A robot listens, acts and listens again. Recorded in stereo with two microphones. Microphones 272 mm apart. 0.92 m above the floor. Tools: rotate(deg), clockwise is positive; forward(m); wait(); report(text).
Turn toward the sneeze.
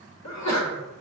rotate(-90)
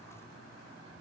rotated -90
report("Facing where the sneeze came from. I can't hear it now.")